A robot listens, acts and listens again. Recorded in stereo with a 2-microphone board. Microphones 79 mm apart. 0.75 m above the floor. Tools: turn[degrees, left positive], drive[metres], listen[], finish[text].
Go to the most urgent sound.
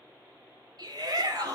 Thought: The shout: about 55° right or 125° right.
Action: turn[-55]
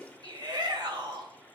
Thought: So it is at 70° right.
Action: turn[-70]
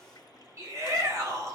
Thought: The shout is now 40° right.
Action: turn[-40]
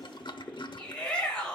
Thought: The shout is now 15° left.
Action: turn[15]
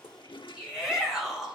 Action: drive[1.0]
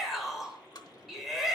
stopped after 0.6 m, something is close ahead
Action: finish[Something is in my way. I am facing the shout but have not reached it.]